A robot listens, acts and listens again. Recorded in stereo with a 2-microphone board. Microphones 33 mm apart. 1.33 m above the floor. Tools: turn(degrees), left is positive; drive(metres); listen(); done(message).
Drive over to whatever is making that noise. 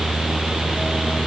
listen()
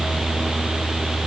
listen()
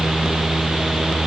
done("I can't make out anything to turn to.")